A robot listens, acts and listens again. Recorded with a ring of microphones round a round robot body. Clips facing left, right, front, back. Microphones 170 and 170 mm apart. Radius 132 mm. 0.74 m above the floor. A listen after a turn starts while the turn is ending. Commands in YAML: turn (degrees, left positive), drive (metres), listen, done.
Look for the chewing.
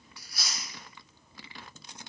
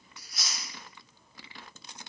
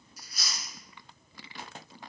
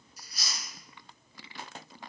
turn: -20
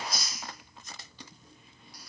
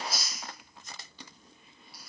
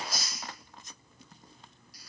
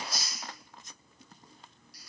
done: "Facing the chewing."